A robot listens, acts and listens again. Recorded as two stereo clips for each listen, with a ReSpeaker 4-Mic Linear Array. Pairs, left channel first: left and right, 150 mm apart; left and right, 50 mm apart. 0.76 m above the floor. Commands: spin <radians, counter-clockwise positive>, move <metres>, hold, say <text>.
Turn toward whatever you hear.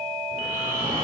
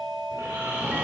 spin -1.31
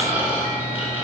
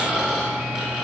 spin -0.26
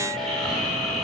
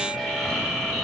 say Facing the snoring.